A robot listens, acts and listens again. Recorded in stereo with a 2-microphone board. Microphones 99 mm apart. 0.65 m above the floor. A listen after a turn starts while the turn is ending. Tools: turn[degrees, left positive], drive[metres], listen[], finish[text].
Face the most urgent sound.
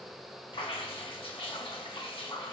Action: listen[]
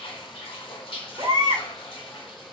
Thought: The baby crying: about 50° right or 130° right.
Action: turn[-50]
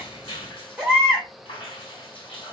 Thought: So it is at 10° right.
Action: turn[-10]
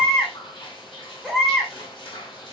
Action: finish[Found it: a baby crying, straight ahead, 1 to 2 m away.]